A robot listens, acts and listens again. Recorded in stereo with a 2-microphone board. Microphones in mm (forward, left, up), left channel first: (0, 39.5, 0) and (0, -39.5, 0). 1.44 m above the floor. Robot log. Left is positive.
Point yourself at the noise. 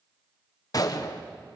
note: The gunshot: about 50° left or 130° left.
cmd yaw +50
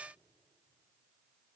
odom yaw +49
cmd idle
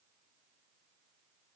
end: I heard a gunshot, but can't make it out now. It was about straight ahead or 85° left.